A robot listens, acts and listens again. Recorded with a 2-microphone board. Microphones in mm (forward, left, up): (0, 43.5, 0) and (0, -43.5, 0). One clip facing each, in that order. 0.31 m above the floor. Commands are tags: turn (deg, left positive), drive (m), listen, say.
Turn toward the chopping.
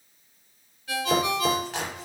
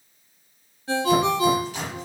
<turn deg="70"/>
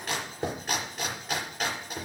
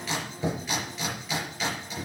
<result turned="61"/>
<turn deg="50"/>
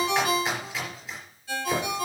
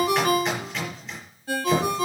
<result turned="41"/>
<say>Found it: chopping, straight ahead.</say>